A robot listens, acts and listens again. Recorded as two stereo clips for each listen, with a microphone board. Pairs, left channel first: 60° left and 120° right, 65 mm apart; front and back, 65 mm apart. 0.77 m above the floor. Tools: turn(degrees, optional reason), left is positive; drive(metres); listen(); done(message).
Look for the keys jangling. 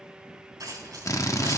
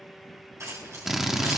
turn(degrees=-140, reason="The keys jangling: 140° right.")
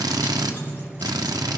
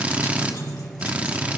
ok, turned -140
listen()
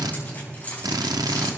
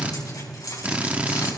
done("Found it: keys jangling, straight ahead, over 4 m away.")